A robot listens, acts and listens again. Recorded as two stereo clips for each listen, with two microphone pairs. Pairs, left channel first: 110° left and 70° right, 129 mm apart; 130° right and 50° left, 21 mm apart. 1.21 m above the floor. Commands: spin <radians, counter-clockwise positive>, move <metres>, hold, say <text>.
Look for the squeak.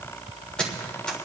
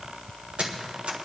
spin 0.52
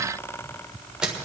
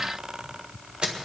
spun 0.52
spin 0.26
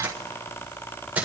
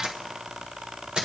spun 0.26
spin 0.17
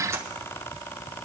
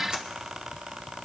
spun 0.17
hold
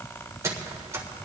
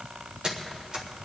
say Facing the squeak, 1 to 2 m away.